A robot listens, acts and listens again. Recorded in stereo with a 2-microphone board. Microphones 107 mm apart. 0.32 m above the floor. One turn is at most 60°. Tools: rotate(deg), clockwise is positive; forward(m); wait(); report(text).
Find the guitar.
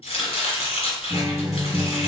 rotate(-25)
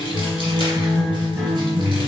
report("Facing the guitar, 1 to 2 m away.")